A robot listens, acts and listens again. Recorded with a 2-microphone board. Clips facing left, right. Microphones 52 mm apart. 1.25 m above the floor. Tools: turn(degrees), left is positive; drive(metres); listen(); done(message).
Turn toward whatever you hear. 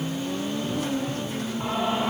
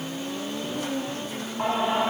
turn(degrees=-90)
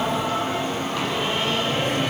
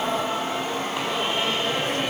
turn(degrees=-10)
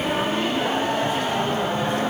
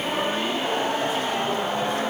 done("Found it: singing, straight ahead, over 4 m away.")